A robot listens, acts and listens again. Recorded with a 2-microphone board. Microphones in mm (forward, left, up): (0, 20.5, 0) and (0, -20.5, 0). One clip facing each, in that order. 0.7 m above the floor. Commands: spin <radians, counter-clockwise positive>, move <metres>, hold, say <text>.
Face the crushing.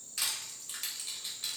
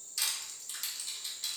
spin 0.44
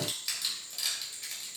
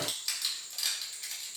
say Facing the crushing, 1 to 2 m away.